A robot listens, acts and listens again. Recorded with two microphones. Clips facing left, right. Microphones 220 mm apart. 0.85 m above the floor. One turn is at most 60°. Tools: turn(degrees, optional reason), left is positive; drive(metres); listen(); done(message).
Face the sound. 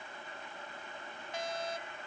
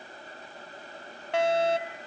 turn(degrees=-60)
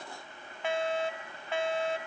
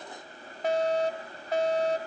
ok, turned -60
turn(degrees=-40, reason="So it is at 40° right.")
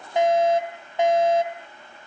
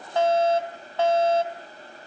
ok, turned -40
turn(degrees=15, reason="The fire alarm is now 15° left.")
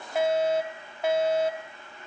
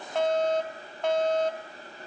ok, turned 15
turn(degrees=10, reason="The fire alarm is now 10° left.")
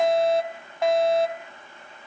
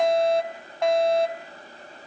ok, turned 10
done("Facing the fire alarm.")